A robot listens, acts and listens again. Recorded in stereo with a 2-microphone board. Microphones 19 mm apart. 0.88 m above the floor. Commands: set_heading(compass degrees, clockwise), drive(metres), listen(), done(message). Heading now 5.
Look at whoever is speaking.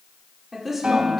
set_heading(20)
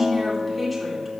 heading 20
done("Facing the woman speaking, 2 to 4 m away.")